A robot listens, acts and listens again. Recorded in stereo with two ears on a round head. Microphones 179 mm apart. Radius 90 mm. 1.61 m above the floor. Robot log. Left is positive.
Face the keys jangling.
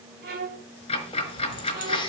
note: The keys jangling: about 25° left or 155° left.
cmd yaw +25
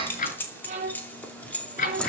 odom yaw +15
cmd yaw +30
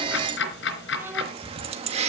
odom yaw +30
note: So it is at 30° right.
cmd yaw -30
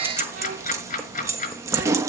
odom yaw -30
note: The keys jangling is now 15° right.
cmd yaw -15
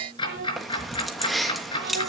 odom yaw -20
end: Facing the keys jangling.